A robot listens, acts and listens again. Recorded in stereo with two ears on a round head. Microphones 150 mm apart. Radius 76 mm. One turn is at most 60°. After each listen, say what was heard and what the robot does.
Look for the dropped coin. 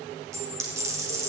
The dropped coin: about 20° right or 160° right. Turn 20° right.
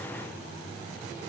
Keep listening.
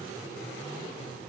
I heard a dropped coin, but can't make it out now. It was about straight ahead or 140° right.